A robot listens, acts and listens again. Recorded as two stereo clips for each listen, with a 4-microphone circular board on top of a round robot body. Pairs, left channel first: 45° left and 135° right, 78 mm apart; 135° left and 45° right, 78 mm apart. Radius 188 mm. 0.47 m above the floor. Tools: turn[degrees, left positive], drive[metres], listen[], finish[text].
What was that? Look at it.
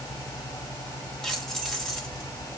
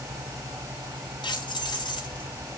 Thought: The keys jangling: 130° left.
Action: turn[130]
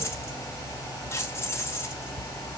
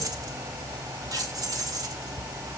Thought: The keys jangling is now 10° right.
Action: turn[-10]
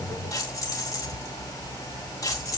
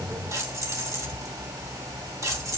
Action: finish[Found it: keys jangling, straight ahead.]